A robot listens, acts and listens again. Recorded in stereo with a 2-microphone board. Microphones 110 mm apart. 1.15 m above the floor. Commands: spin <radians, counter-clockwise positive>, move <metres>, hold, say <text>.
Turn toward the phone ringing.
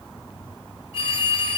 spin 1.05
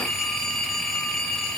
say Found it: a phone ringing, straight ahead.